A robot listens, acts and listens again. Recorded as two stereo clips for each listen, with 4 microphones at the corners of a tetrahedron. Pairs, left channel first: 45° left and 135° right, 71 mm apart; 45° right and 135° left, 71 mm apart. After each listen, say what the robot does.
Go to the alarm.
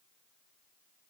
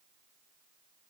Keep listening.
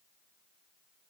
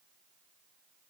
Keep listening.
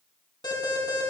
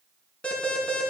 Turn 30° left.
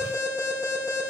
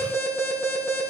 Turn 15° left.
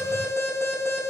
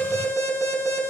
Drive 1.0 m forward.
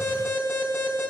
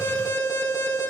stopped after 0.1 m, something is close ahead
Something is in my way. I am facing the alarm but have not reached it.